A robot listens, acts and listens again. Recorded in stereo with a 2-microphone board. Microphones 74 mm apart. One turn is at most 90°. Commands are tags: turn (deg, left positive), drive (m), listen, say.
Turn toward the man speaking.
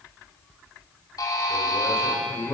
<turn deg="55"/>
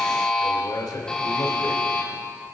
<turn deg="70"/>
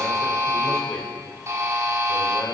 <listen/>
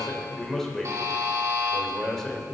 <say>Found it: a man speaking, straight ahead, 2 to 4 m away.</say>